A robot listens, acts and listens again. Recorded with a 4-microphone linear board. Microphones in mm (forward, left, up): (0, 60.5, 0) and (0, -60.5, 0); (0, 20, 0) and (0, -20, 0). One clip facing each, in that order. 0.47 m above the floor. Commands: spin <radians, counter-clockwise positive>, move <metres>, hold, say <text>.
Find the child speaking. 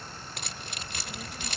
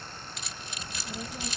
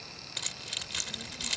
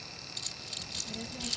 spin -0.52
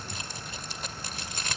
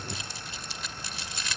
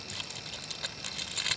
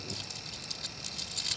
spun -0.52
hold
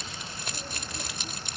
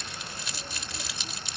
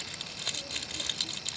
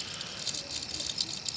hold
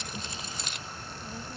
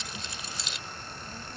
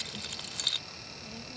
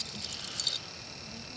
spin 0.26
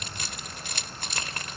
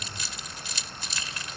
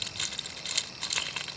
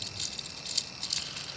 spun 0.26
hold
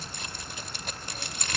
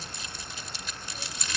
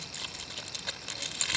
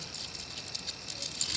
hold
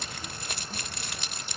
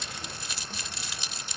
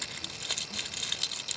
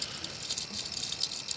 say Facing where the child speaking came from. I can't hear it now.